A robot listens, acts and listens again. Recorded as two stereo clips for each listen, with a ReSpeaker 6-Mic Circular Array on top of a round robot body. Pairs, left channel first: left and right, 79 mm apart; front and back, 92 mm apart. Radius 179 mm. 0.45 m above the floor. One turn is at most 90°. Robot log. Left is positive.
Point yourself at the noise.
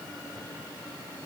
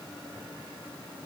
cmd idle
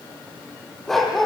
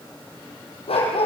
end: Facing the dog barking, over 4 m away.